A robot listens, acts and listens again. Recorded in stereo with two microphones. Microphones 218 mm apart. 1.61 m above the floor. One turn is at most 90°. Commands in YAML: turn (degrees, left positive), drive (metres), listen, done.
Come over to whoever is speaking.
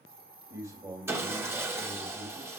turn: -30
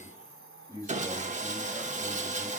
turn: 15
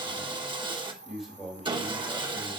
drive: 1.0
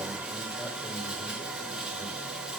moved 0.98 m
listen: true
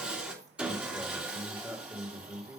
turn: -10
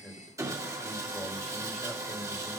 drive: 1.0
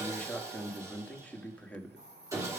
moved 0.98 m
drive: 1.0
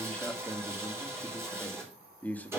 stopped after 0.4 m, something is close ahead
done: "Arrived at the man speaking, straight ahead."